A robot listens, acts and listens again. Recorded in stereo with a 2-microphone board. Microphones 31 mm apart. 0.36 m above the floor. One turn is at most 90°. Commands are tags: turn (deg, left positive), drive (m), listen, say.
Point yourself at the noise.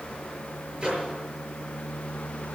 <turn deg="-30"/>
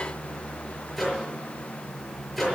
<say>Facing the microwave, over 4 m away.</say>